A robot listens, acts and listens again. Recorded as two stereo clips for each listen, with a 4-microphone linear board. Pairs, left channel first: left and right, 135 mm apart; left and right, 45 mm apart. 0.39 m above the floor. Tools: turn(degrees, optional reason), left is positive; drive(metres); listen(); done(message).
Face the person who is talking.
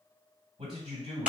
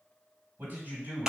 turn(degrees=-55, reason="The man speaking: about 55° right or 125° right.")
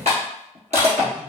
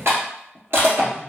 turn(degrees=-15, reason="So it is at 15° right.")
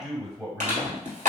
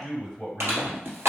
done("Facing the man speaking.")